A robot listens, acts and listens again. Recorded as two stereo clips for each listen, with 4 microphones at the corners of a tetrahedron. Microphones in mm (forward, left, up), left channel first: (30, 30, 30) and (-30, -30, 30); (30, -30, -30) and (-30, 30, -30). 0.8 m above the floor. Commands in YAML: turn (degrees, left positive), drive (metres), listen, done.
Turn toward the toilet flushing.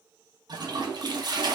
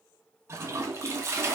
turn: -170
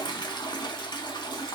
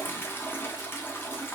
turn: 20
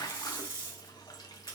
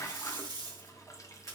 done: "Found it: a toilet flushing, straight ahead."